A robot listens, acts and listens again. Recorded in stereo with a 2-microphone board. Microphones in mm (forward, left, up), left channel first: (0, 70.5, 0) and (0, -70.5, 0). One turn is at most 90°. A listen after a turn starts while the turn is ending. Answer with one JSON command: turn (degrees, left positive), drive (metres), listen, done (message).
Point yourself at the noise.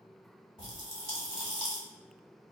{"turn": 40}
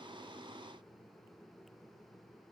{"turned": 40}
{"listen": true}
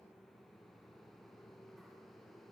{"done": "I heard a pop, but can't make it out now. It was about straight ahead or 100° left."}